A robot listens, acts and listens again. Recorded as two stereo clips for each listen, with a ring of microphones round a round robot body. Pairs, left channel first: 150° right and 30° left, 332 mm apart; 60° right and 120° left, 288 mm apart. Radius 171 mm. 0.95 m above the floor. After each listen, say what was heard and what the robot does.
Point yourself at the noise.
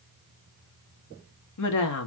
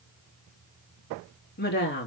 The woman speaking: 115° right. Turn 115° right.
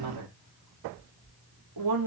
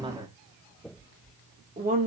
The woman speaking is now 60° left. Turn 60° left.
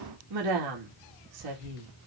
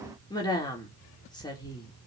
The woman speaking is now 15° left. Turn 15° left.
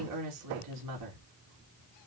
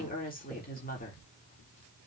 Facing the woman speaking.